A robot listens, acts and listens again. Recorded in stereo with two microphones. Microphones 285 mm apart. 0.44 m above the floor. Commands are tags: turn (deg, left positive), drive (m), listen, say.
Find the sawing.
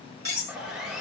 <turn deg="30"/>
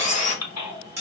<turn deg="155"/>
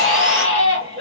<listen/>
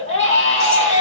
<listen/>
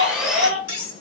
<say>Found it: sawing, straight ahead, under 1 m away.</say>